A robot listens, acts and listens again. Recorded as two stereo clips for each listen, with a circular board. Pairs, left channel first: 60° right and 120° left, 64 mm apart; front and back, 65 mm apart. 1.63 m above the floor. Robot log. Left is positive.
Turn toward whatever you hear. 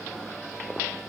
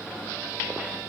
cmd idle
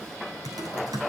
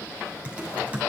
note: The typing on a keyboard: 110° left.
cmd yaw +110
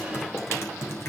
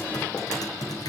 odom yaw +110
note: The typing on a keyboard is now 10° right.
cmd yaw -10
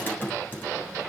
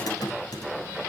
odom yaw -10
end: Found it: typing on a keyboard, straight ahead, over 4 m away.